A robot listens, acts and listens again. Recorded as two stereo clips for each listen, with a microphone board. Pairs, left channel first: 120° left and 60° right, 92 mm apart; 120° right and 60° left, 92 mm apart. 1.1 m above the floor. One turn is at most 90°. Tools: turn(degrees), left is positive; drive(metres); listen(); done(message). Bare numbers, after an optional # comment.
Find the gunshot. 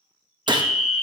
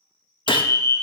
# The gunshot: 95° right.
turn(-90)
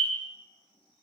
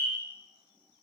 done("I heard a gunshot from this way, but can't make it out now.")